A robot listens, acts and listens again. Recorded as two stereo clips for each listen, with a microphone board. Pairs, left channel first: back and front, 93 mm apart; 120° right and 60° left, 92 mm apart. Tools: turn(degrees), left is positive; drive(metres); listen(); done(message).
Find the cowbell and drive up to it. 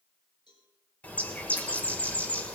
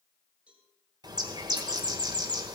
turn(degrees=140)
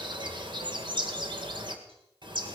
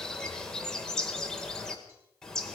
listen()
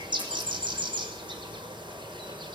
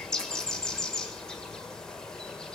listen()
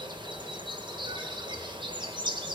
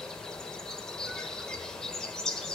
done("Facing where the cowbell came from. I can't hear it now. I did not reach it.")